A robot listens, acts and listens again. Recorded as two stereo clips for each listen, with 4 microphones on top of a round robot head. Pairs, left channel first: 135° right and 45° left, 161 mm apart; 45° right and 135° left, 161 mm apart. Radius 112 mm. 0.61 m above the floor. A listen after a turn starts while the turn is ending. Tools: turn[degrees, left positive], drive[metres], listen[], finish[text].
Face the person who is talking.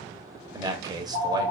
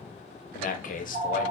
Thought: The man speaking: 20° right.
Action: turn[-20]
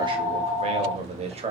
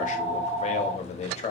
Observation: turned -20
Action: finish[Found it: a man speaking, straight ahead, 1 to 2 m away.]